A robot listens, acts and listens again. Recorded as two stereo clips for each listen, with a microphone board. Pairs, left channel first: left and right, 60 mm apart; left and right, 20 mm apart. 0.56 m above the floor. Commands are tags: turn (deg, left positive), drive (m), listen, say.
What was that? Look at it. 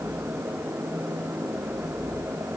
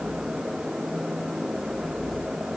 <listen/>
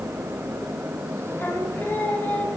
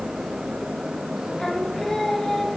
<turn deg="25"/>
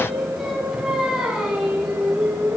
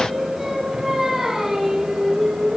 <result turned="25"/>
<turn deg="-15"/>
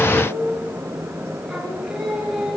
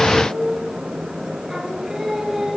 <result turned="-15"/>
<turn deg="-10"/>
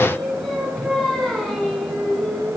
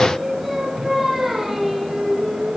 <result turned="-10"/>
<say>Found it: singing, straight ahead, over 4 m away.</say>